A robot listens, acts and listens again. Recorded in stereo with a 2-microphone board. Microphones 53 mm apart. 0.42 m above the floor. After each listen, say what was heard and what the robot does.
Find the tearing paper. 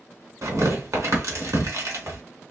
Turn 90° right.
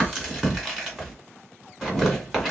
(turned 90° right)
Found it: tearing paper, straight ahead.